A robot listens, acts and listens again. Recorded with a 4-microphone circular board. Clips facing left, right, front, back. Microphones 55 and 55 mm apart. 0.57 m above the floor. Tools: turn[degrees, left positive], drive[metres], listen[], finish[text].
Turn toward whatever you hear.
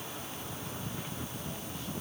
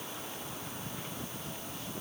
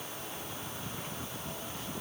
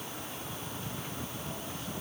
Action: listen[]
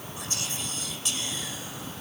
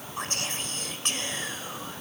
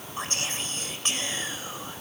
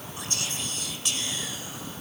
Thought: The whispering: 50° right.
Action: turn[-50]
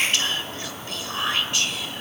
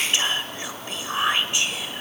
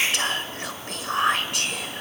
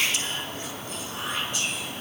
Thought: The whispering is now 20° right.
Action: turn[-20]
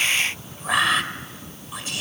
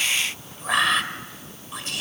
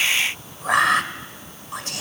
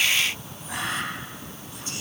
Action: finish[Found it: whispering, straight ahead.]